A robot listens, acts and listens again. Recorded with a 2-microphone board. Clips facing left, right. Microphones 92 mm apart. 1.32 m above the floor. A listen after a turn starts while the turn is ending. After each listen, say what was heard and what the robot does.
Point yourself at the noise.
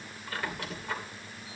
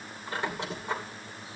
The squeak: about 25° right or 155° right. Turn 25° right.
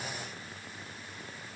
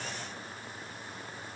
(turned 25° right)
Keep listening.
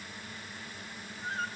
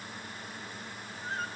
Facing the squeak, 2 to 4 m away.